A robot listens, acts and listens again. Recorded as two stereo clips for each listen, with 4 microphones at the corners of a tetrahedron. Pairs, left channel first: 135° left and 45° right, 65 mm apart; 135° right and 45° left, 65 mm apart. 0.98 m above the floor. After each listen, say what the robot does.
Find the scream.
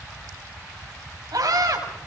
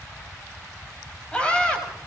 Turn 60° right.
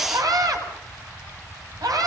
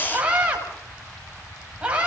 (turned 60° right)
Turn 25° right.
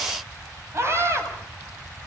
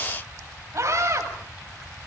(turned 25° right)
Found it: a scream, straight ahead, over 4 m away.